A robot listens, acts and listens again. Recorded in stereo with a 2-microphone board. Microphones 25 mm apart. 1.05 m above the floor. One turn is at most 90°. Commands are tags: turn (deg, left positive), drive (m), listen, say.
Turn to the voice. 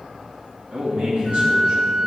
<turn deg="-90"/>
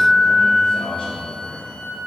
<turn deg="20"/>
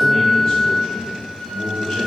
<turn deg="10"/>
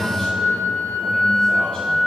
<say>Facing the man speaking.</say>